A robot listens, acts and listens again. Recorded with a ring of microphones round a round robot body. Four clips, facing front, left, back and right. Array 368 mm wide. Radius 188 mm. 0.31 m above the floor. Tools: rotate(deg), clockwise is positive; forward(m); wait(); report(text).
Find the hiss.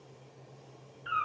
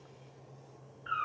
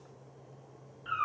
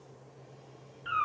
wait()
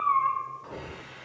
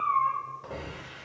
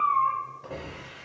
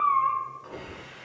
rotate(-140)
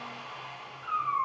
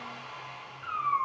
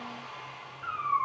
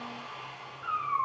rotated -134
report("Found it: a hiss, straight ahead, under 1 m away.")